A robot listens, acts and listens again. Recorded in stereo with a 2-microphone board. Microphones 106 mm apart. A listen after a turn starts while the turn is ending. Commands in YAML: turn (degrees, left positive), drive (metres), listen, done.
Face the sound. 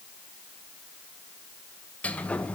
turn: 30
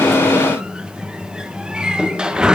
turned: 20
done: "Found it: a sliding door, straight ahead, 1 to 2 m away."